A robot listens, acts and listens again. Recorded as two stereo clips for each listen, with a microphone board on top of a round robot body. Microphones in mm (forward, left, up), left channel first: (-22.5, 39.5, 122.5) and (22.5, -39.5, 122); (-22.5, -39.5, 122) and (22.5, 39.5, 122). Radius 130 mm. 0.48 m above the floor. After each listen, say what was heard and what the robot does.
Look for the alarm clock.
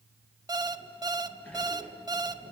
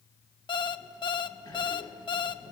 The alarm clock: 100° right. Turn 100° right.
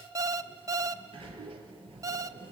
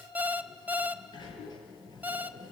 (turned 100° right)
The alarm clock is now 10° right. Turn 10° right.
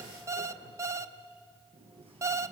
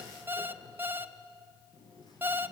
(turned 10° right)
Found it: an alarm clock, straight ahead.